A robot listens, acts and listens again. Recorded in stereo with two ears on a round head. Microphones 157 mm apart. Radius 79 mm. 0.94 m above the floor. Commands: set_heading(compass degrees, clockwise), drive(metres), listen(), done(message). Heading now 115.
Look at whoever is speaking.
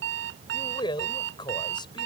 set_heading(90)
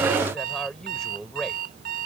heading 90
done("Found it: a man speaking, straight ahead.")